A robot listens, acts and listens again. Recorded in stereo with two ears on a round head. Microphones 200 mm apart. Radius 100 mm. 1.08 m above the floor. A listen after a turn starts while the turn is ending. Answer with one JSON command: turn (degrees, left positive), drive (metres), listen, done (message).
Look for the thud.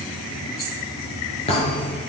{"turn": 25}
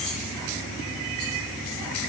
{"listen": true}
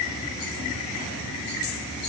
{"done": "I heard a thud, but can't make it out now. It was about straight ahead or 130° left."}